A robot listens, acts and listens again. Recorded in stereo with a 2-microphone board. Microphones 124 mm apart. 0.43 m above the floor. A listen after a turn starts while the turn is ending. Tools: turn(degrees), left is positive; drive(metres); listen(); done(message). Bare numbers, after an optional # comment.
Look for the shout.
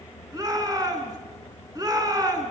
# The shout: about 30° right or 150° right.
turn(-30)
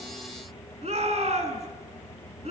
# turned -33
# So it is at 115° right.
turn(-115)
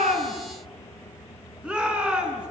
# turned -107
# The shout is now 10° right.
turn(-10)
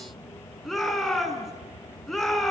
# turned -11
done("Facing the shout, over 4 m away.")